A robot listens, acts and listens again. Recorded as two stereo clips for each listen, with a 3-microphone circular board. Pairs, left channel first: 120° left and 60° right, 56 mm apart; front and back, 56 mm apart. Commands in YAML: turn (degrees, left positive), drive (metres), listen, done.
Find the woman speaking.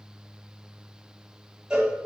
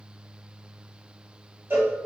listen: true
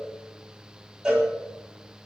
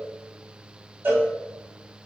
listen: true
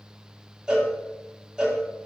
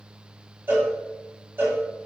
done: "I can't make out a woman speaking, only a cowbell."